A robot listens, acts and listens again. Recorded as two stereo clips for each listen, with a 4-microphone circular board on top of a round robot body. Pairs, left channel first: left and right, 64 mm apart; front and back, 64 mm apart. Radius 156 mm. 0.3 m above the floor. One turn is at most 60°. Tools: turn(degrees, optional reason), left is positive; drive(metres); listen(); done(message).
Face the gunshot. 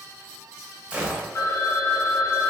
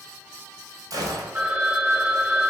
turn(degrees=-60, reason="The gunshot: 160° right.")
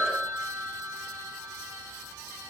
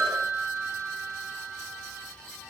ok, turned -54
turn(degrees=-60, reason="Nothing new. It was at 110° right.")
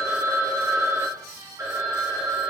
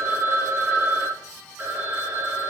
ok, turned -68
turn(degrees=-40, reason="Nothing new. It was at 40° right.")
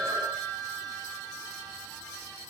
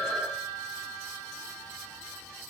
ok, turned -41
done("Facing where the gunshot came from. I can't hear it now.")